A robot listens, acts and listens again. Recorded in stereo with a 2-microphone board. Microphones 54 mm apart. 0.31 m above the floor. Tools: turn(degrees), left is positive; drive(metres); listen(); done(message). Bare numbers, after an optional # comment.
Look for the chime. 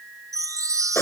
turn(-90)
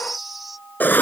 done("Facing the chime.")